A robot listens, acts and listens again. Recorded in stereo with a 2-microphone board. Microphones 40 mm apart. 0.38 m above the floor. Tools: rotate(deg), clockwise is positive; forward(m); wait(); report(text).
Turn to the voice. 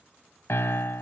wait()
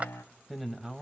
rotate(-30)
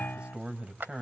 rotate(30)
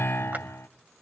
wait()
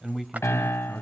rotate(10)
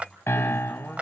wait()
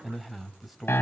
report("Facing the man speaking.")